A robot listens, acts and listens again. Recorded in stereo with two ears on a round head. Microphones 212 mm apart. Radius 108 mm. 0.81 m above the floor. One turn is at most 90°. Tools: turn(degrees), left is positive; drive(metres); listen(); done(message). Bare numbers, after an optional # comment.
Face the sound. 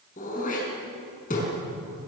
# The throat clearing: about 35° left or 145° left.
turn(35)
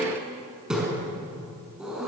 done("Found it: throat clearing, straight ahead.")